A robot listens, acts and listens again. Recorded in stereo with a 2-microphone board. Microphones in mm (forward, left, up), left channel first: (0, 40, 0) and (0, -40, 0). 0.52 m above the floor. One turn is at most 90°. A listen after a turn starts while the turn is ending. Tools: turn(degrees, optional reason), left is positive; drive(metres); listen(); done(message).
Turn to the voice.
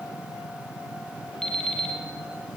listen()
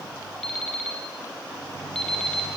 listen()
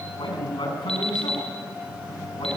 turn(degrees=75, reason="The man speaking: about 75° left or 105° left.")
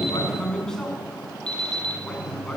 done("Found it: a man speaking, straight ahead, over 4 m away.")